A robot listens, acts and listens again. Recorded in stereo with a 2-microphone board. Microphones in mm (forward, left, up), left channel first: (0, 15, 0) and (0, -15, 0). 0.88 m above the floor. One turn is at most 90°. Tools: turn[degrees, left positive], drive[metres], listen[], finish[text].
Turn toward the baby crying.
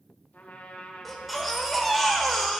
Action: turn[30]
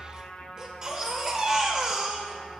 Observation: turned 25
Thought: So it is at 20° right.
Action: turn[-20]
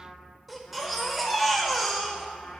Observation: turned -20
Action: finish[Facing the baby crying, 1 to 2 m away.]